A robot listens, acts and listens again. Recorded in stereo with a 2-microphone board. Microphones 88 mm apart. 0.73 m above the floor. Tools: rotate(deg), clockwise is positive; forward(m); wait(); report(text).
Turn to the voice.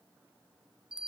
wait()
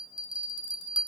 wait()
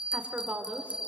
rotate(15)
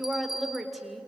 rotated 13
report("Facing the woman speaking, 2 to 4 m away.")